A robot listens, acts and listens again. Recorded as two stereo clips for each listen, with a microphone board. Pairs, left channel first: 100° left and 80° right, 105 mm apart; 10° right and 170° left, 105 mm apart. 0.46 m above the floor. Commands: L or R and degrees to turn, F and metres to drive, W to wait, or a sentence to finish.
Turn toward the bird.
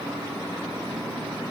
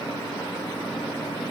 W
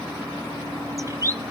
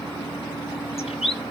R20
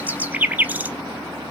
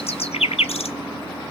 Found it: a bird, straight ahead, under 1 m away.